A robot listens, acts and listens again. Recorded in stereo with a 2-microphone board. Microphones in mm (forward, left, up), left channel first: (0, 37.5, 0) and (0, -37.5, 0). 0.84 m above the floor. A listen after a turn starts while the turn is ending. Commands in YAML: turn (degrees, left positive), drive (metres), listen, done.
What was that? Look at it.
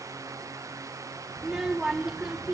turn: -30
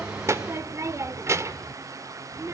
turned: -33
turn: -140
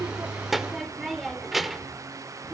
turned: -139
done: "Facing the child speaking."